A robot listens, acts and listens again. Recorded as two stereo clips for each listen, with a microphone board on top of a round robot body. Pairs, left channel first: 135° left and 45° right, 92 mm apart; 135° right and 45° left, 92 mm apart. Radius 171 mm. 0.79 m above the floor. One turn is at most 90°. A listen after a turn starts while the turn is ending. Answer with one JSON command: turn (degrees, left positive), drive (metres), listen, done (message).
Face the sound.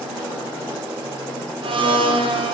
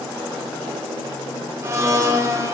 {"turn": -15}
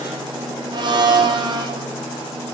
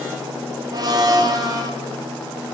{"done": "Found it: a blender, straight ahead, 1 to 2 m away."}